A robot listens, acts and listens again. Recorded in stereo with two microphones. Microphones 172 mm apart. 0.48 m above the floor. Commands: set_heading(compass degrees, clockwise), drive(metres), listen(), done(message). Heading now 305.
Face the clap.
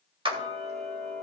set_heading(335)
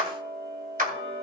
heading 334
set_heading(89)
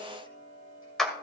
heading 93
done("Found it: a clap, straight ahead, 2 to 4 m away.")